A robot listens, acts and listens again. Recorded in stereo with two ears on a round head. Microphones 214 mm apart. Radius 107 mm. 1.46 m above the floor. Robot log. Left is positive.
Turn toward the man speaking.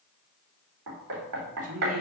note: The man speaking: about 60° right or 120° right.
cmd yaw -60
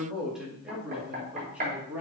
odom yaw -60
end: Found it: a man speaking, straight ahead, 2 to 4 m away.